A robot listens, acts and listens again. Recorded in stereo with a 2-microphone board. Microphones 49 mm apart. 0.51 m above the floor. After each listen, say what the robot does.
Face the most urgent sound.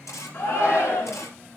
Turn 50° left.
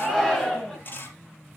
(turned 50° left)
Facing the shout, over 4 m away.